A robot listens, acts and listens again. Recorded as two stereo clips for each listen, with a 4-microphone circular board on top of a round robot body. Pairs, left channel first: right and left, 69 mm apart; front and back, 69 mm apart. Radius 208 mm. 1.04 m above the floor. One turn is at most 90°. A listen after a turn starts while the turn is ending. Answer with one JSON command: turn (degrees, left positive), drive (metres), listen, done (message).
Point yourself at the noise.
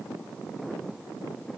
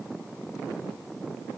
{"listen": true}
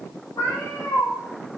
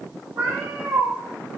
{"turn": -90}
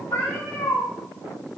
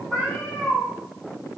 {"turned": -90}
{"turn": -85}
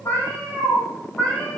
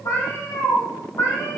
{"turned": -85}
{"turn": -15}
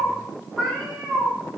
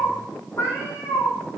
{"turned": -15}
{"done": "Facing the cat meowing, 2 to 4 m away."}